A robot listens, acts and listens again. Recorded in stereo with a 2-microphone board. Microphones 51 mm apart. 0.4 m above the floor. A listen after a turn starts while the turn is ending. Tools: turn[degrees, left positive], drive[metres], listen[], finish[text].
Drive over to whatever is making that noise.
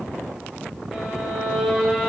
Action: turn[30]
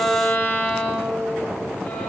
Thought: So it is at 150° left.
Action: turn[150]
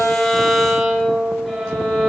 Action: drive[1.0]
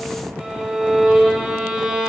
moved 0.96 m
Action: drive[1.0]
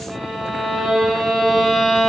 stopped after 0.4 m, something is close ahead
Action: finish[Arrived at the violin, straight ahead.]